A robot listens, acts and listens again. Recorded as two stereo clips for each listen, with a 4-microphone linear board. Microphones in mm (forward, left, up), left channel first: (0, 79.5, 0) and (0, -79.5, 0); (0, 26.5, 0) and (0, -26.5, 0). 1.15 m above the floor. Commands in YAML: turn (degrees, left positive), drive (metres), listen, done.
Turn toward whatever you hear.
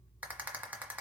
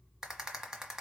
turn: -30
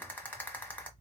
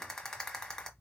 turn: 15
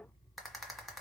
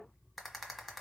done: "Facing the rattle, 1 to 2 m away."